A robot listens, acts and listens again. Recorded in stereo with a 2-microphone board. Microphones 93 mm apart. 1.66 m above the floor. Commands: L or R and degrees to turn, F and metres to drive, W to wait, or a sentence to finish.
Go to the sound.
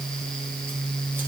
W
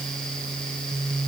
W
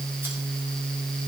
I can't make out anything.